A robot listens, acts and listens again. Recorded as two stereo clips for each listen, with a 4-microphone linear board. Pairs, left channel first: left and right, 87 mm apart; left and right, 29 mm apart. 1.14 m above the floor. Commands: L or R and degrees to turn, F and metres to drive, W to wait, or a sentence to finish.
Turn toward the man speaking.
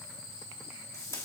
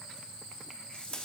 W
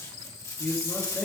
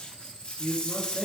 L30
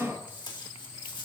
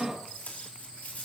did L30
R15
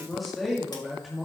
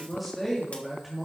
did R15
Facing the man speaking, 2 to 4 m away.